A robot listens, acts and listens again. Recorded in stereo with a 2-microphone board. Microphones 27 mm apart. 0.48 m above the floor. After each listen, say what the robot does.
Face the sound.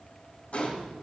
Turn 50° left.
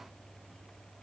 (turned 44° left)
Keep listening.
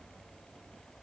I heard a gunshot, but can't make it out now. It was about 5° left or 85° left.